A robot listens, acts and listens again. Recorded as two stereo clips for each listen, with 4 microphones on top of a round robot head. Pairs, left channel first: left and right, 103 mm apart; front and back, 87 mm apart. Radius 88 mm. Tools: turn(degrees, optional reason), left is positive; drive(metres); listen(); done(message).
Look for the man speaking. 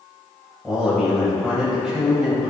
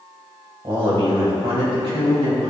turn(degrees=-170, reason="The man speaking: 170° right.")
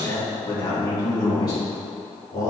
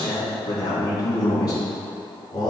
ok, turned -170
turn(degrees=45, reason="The man speaking is now 45° left.")
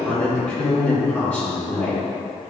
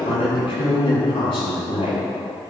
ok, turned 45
turn(degrees=15, reason="The man speaking is now 15° left.")
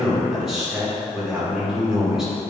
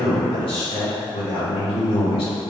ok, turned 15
done("Found it: a man speaking, straight ahead.")